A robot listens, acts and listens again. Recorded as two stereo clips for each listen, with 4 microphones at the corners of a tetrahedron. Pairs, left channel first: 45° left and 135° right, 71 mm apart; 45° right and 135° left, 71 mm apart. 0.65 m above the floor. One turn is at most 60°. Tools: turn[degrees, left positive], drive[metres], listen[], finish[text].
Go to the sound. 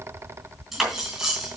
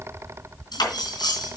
Thought: The cutlery clinking: 50° right.
Action: turn[-50]
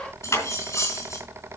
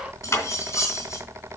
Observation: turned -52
Action: drive[1.0]
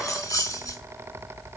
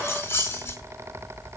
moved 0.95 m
Thought: The cutlery clinking is now 10° left.
Action: turn[10]
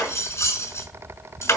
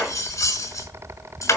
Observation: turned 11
Action: drive[1.0]
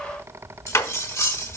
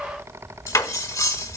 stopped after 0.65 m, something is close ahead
Action: finish[I am next to the cutlery clinking.]